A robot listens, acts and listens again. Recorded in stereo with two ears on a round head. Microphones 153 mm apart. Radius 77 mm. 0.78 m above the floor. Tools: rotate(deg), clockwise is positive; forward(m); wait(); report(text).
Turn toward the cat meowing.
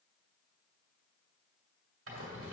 wait()
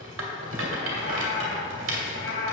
rotate(-70)
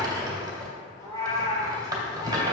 rotate(-20)
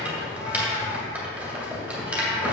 wait()
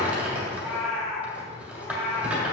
report("Found it: a cat meowing, straight ahead, 2 to 4 m away.")